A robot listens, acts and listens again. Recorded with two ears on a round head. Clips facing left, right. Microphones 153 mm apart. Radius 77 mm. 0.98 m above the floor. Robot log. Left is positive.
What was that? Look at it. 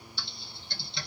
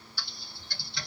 note: The typing on a keyboard: about 20° left or 160° left.
cmd yaw +20
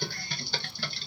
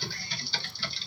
note: So it is at 140° left.
cmd yaw +140
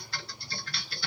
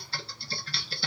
note: The typing on a keyboard is now 25° right.
cmd yaw -25
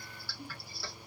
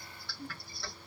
end: Facing the typing on a keyboard, under 1 m away.